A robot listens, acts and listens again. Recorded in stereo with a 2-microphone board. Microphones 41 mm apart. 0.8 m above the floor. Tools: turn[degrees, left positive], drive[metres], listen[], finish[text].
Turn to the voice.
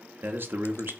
Thought: The man speaking: about 60° right or 120° right.
Action: turn[-60]
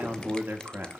Thought: So it is at 55° right.
Action: turn[-55]
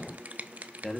Thought: The man speaking is now 10° left.
Action: turn[10]
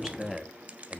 Action: finish[Facing the man speaking, 1 to 2 m away.]